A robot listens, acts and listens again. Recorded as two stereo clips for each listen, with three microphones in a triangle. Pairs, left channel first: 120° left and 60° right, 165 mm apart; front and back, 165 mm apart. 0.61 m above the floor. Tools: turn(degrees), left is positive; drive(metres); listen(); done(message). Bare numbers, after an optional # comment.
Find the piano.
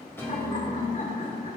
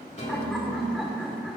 # The piano: 45° left.
turn(45)
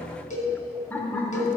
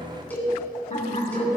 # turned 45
listen()
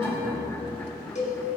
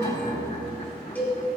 listen()
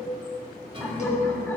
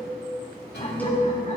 done("Found it: a piano, straight ahead.")